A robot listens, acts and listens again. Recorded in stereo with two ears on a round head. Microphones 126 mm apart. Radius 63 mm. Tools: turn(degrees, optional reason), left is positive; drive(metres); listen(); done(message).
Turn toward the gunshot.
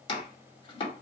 listen()
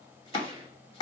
turn(degrees=-25, reason="The gunshot: about 25° right or 155° right.")
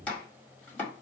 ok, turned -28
listen()
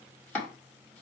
done("I heard a gunshot, but can't make it out now. It was about 5° left or 130° right.")